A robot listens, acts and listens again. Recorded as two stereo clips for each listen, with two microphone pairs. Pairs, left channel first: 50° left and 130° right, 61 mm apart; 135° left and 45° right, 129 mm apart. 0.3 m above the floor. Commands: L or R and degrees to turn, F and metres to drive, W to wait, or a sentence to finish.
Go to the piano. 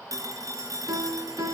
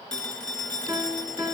R110
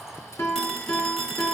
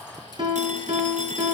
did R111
F1.0
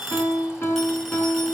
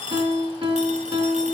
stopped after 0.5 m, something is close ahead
Blocked. The piano is further on, straight ahead.